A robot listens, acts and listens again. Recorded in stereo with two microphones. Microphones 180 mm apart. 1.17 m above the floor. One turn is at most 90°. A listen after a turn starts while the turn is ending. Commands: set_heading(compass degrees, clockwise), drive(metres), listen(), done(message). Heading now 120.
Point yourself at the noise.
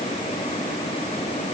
listen()
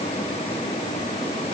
listen()
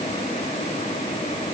done("I can't make out anything.")